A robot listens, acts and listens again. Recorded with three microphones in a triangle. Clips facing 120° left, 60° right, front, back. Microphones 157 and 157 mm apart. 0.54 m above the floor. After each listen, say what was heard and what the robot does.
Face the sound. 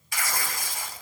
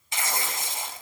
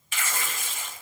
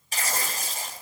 The tearing paper: 125° right. Turn 125° right.
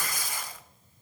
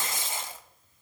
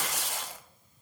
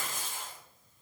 Found it: tearing paper, straight ahead, under 1 m away.